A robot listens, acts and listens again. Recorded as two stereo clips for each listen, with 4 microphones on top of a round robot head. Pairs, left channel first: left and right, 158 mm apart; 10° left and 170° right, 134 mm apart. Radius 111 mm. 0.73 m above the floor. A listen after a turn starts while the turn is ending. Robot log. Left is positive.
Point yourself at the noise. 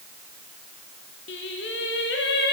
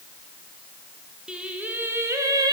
note: The singing: 130° left.
cmd yaw +130
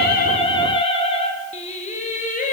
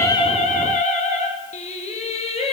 note: The singing is now 50° left.
cmd yaw +50
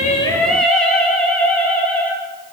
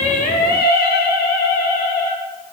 note: The singing is now 10° left.
cmd yaw +10
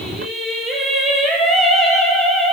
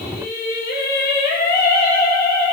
end: Facing the singing, 2 to 4 m away.